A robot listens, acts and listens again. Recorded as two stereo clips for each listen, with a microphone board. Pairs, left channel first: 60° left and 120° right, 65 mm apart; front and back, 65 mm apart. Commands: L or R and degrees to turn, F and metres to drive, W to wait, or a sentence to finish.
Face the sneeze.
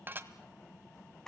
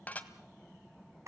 W
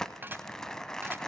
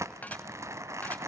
W
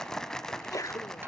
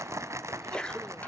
L75
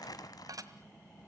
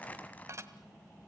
Facing where the sneeze came from. I can't hear it now.